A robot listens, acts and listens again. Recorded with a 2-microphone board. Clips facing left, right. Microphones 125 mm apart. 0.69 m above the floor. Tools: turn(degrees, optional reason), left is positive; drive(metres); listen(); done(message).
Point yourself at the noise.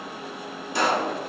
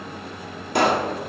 turn(degrees=-60, reason="The pop: about 60° right or 120° right.")
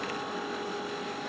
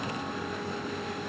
listen()
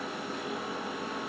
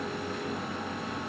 done("I heard a pop, but can't make it out now. It was about straight ahead or 60° right.")